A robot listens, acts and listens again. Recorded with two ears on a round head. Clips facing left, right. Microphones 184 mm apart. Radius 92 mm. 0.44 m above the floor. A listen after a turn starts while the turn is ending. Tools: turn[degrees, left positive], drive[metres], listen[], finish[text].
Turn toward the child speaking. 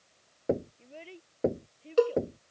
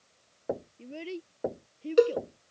Thought: The child speaking: about 60° right or 120° right.
Action: turn[-60]
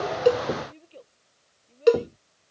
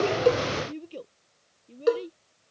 Thought: So it is at 55° right.
Action: turn[-55]
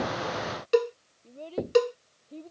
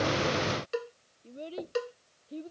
Thought: The child speaking is now 15° right.
Action: turn[-15]
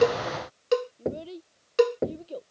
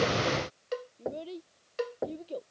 Action: finish[Facing the child speaking.]